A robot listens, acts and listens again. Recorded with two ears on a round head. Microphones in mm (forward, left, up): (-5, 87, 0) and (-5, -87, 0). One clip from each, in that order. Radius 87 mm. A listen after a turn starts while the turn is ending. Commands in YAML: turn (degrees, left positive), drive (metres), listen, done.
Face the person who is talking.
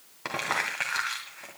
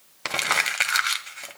listen: true
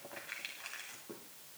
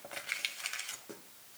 listen: true
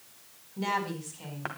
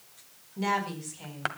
turn: -30
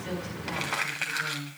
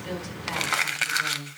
turn: -135
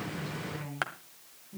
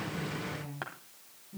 turn: 25
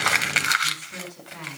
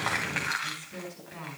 turn: 10
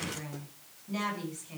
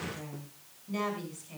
done: "Facing the woman speaking."